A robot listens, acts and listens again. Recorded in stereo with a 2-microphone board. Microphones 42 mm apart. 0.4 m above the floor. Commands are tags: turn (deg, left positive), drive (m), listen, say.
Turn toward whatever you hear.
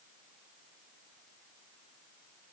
<listen/>
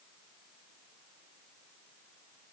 <listen/>
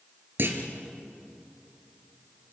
<turn deg="-60"/>
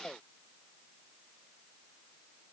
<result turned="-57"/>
<listen/>
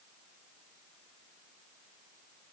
<say>I heard a clunk, but can't make it out now. It was about straight ahead or 65° right.</say>